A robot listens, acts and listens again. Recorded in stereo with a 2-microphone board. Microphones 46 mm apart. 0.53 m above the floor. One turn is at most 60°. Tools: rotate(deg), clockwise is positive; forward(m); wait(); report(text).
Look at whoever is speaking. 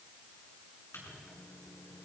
wait()
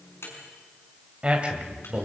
rotate(30)
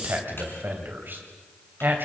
rotate(60)
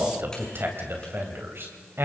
rotate(60)
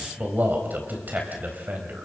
rotate(50)
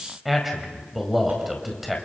report("Found it: a man speaking, straight ahead, 2 to 4 m away.")